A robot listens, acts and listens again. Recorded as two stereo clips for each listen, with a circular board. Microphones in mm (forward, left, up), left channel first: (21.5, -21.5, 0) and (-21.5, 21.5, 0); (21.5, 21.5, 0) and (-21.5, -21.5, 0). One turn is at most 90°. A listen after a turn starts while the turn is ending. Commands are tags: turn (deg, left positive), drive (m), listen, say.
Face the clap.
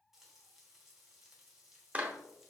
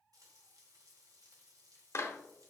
<turn deg="75"/>
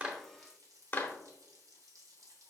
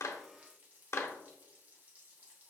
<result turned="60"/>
<turn deg="15"/>
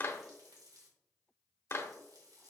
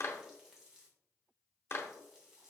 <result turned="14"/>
<say>Found it: a clap, straight ahead.</say>